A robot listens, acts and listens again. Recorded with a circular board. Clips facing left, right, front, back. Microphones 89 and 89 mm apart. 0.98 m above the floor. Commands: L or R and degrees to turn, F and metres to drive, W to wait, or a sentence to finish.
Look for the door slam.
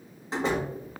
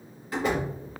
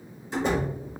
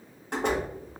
L155
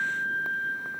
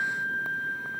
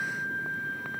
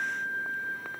I heard a door slam from this way, but can't make it out now.